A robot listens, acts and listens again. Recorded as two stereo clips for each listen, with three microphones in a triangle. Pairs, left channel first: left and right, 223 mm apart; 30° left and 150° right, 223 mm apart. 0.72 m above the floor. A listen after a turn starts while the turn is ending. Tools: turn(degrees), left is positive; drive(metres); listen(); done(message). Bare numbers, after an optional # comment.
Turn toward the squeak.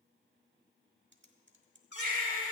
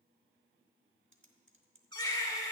# The squeak: 95° left.
turn(95)
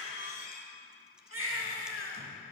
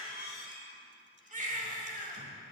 # The squeak is now 45° left.
turn(45)
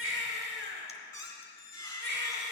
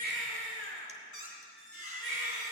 # The squeak is now 15° left.
turn(15)
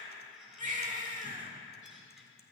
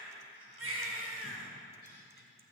listen()
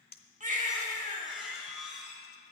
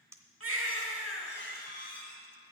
done("Facing the squeak.")